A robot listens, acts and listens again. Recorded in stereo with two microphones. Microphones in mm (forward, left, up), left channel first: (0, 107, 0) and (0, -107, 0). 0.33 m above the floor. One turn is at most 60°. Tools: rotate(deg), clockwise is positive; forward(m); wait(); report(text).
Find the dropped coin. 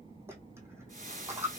rotate(30)
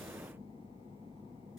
wait()
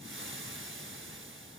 report("I heard a dropped coin, but can't make it out now. It was about 15° left or 135° right.")